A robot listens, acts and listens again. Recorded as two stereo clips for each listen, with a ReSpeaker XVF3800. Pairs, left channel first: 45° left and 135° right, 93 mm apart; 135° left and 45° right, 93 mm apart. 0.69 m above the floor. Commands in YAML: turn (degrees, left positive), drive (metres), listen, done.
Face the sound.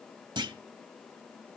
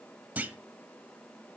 turn: -115
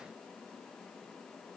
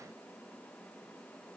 done: "I heard a clunk from this way, but can't make it out now."